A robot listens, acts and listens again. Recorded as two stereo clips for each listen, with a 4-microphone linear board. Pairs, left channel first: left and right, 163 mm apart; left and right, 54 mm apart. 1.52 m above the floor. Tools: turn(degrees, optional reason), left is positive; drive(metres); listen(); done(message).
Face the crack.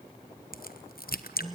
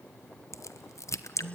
turn(degrees=75, reason="The crack: about 75° left or 105° left.")
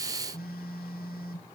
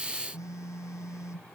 listen()
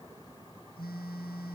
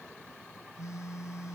done("I heard a crack, but can't make it out now. It was about straight ahead or 30° left.")